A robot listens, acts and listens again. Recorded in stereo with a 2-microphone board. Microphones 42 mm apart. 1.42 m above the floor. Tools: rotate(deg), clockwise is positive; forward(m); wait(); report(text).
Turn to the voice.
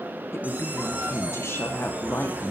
rotate(-90)
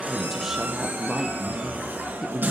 report("Facing the woman speaking, under 1 m away.")